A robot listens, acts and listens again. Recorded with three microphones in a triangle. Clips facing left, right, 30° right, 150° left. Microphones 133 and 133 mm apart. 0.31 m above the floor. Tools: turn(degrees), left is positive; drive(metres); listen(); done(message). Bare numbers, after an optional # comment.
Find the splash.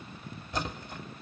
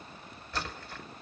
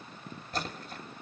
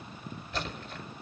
# The splash: 20° left.
turn(20)
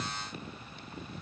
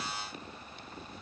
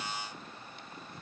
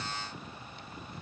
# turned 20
done("Facing where the splash came from. I can't hear it now.")